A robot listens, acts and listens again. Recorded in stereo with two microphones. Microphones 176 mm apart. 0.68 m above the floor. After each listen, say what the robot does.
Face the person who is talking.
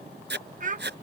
Turn 45° right.
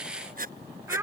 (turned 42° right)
Turn 15° right.
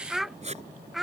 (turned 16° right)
Facing the child speaking.